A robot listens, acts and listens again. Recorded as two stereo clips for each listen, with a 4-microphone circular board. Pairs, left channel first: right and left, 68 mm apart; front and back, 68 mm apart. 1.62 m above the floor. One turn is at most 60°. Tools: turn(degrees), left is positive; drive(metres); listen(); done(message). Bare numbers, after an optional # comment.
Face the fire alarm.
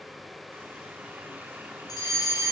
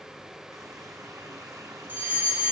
# The fire alarm: 115° right.
turn(-60)
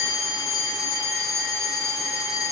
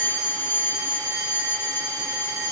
# The fire alarm is now 55° right.
turn(-55)
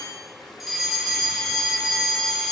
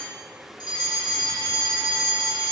done("Facing the fire alarm.")